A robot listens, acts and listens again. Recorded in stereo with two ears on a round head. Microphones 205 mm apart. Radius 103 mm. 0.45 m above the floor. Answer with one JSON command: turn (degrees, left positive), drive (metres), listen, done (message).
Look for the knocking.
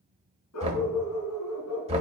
{"turn": -30}
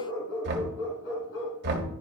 {"turn": -120}
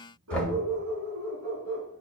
{"done": "Found it: knocking, straight ahead."}